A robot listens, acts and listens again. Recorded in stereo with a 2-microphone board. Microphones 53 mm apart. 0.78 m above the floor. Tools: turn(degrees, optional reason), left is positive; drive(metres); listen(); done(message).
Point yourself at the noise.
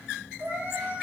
turn(degrees=-35, reason="The cat meowing: about 35° right or 145° right.")
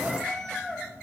turn(degrees=10, reason="So it is at 10° left.")
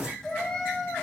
turn(degrees=15, reason="The cat meowing is now 15° left.")
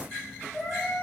done("Found it: a cat meowing, straight ahead.")